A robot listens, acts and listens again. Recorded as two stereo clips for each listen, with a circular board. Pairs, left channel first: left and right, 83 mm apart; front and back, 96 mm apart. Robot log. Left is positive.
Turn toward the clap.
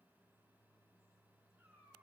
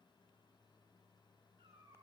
cmd idle
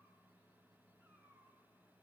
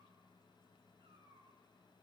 cmd idle
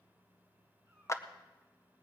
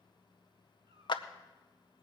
note: The clap: 35° left.
cmd yaw +35
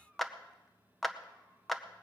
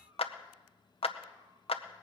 end: Facing the clap.